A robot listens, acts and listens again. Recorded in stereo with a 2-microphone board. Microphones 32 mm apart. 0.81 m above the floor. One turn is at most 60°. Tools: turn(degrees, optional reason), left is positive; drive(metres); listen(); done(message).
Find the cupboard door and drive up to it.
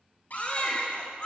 turn(degrees=55, reason="The cupboard door: about 55° left or 125° left.")
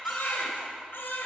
listen()
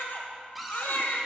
drive(metres=1.0)
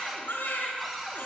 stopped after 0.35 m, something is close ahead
done("Something is in my way. I am facing the cupboard door but have not reached it.")